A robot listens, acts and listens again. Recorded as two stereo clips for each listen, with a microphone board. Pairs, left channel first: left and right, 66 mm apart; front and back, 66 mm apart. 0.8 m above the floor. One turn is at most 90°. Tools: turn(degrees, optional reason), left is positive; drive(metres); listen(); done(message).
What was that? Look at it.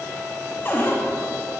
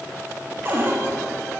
turn(degrees=90, reason="The cupboard door: 135° left.")
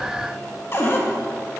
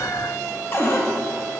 turn(degrees=40, reason="The cupboard door is now 40° left.")
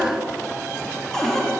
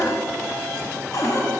done("Found it: a cupboard door, straight ahead.")